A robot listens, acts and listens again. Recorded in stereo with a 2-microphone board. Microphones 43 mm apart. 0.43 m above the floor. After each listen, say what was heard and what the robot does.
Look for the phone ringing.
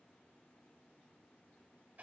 Keep listening.
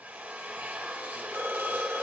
The phone ringing: about 75° right or 105° right. Turn 75° right.
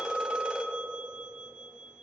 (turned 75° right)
So it is at 20° right. Turn 20° right.
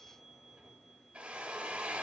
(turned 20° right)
Keep listening.
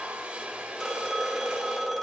Facing the phone ringing, 1 to 2 m away.